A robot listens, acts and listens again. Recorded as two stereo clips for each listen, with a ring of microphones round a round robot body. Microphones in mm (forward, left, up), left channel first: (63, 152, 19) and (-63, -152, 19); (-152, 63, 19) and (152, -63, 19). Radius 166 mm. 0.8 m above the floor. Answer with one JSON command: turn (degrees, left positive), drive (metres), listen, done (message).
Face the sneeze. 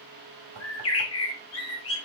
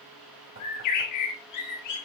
{"listen": true}
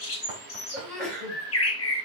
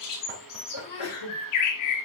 {"turn": 155}
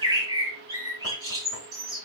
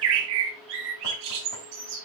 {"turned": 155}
{"done": "I heard a sneeze from this way, but can't make it out now."}